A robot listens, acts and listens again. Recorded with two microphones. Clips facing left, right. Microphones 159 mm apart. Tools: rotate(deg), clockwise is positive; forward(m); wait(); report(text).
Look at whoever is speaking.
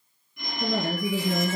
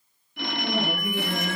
rotate(-90)
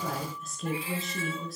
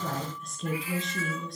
report("Found it: a woman speaking, straight ahead, over 4 m away.")